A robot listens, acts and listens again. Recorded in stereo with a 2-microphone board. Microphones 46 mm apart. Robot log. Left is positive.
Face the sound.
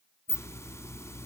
cmd yaw +90
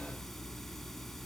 end: Facing the hiss.